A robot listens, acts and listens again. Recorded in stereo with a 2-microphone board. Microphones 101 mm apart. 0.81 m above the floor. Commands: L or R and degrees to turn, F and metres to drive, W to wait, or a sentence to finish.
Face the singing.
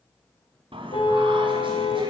R60
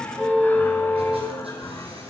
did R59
L25
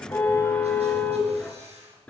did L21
L15
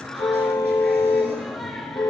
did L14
Facing the singing, over 4 m away.